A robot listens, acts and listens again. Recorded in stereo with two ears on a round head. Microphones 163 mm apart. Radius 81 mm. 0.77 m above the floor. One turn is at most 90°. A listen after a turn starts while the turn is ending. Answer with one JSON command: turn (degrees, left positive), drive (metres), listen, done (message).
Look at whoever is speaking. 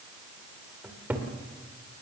{"listen": true}
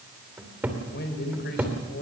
{"turn": 60}
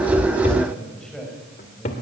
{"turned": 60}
{"done": "Found it: a man speaking, straight ahead."}